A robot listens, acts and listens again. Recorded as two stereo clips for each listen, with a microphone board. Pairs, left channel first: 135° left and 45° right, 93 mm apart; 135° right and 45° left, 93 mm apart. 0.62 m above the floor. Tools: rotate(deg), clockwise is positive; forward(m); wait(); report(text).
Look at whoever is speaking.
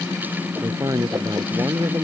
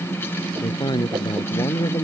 rotate(95)
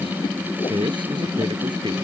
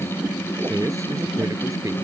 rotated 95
rotate(10)
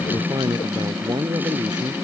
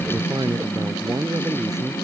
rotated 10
report("Facing the man speaking.")